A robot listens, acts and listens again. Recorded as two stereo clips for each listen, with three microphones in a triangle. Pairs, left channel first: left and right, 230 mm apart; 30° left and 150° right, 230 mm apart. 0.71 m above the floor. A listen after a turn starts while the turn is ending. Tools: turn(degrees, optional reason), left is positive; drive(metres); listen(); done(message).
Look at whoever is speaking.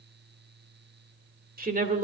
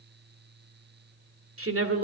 turn(degrees=-145, reason="The woman speaking: 145° right.")
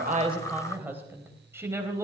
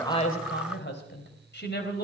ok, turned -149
turn(degrees=-10, reason="The woman speaking is now 10° right.")
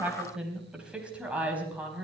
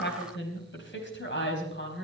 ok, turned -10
done("Facing the woman speaking.")